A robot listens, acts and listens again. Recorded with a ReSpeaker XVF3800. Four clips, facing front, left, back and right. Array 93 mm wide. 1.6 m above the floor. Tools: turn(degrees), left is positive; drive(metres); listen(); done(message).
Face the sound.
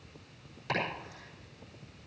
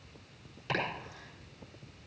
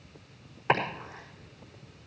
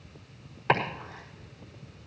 turn(degrees=-125)
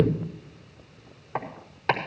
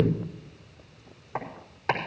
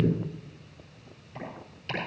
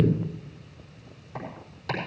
turn(degrees=30)
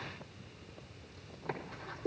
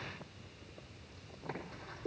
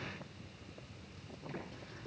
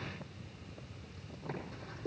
done("Facing the chopping, over 4 m away.")